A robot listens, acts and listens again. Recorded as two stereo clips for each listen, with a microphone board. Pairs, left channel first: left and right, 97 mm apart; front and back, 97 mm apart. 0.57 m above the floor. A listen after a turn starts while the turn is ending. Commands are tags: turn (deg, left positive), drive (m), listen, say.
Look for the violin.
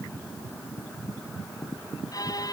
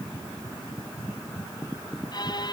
<turn deg="40"/>
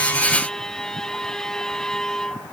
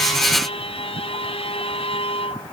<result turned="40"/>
<say>Facing the violin.</say>